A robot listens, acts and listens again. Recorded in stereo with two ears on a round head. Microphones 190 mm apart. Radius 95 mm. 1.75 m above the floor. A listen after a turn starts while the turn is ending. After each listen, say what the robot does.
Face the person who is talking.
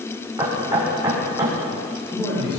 Turn 25° left.
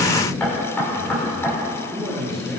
Facing the man speaking.